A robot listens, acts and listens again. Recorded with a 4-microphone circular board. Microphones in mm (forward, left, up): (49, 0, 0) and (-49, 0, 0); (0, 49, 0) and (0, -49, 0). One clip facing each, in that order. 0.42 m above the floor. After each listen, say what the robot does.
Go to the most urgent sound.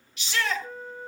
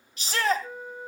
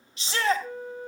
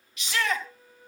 Turn 140° left.
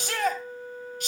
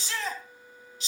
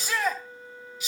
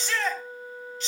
Turn 10° left.
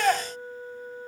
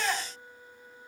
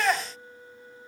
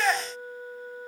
Drive 1.0 m forward.
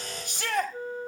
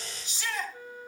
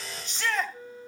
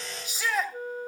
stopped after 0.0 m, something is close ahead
Turn 10° right.
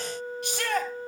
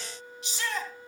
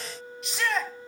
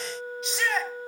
Something is in my way. I am facing the shout but have not reached it.